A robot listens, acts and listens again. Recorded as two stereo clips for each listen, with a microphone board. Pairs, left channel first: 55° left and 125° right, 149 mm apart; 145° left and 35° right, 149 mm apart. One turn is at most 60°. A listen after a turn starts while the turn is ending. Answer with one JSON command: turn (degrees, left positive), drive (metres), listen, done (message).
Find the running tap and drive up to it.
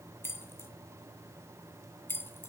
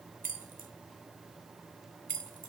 {"listen": true}
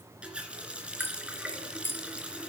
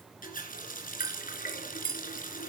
{"turn": 60}
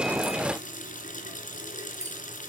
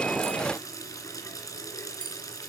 {"turn": 60}
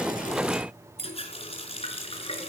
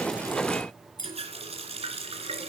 {"turn": 10}
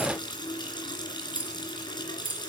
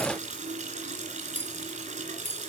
{"drive": 1.0}
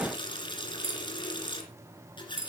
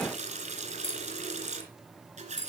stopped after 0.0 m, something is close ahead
{"done": "Something is in my way. I am facing the running tap but have not reached it."}